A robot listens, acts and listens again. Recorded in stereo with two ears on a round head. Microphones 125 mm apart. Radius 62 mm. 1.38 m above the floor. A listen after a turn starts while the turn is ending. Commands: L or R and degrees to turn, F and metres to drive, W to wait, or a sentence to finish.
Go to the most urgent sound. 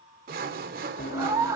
R20
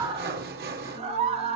R135
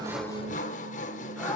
W
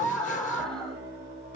F1.0
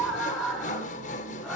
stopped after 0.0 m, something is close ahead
Blocked. The scream is further on, straight ahead.